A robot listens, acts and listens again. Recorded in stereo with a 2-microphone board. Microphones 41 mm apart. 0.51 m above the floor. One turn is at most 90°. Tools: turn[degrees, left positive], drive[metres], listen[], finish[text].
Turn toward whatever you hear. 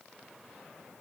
Action: listen[]
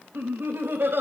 Thought: The laughter: about 65° right or 115° right.
Action: turn[-65]
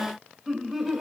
Action: finish[Facing the laughter.]